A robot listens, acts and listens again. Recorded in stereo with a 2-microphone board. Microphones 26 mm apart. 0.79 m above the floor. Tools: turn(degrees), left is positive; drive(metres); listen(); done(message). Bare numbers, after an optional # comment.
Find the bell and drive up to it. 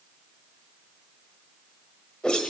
listen()
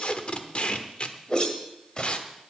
listen()
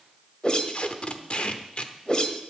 done("I can't make out a bell to turn to.")